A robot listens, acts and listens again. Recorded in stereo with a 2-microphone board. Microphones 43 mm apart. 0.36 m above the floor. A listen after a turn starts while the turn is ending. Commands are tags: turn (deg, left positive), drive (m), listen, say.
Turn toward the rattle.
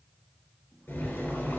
<listen/>
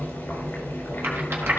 <turn deg="-60"/>
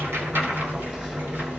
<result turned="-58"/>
<listen/>
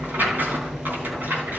<turn deg="-50"/>
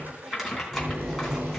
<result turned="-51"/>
<say>Facing the rattle, 2 to 4 m away.</say>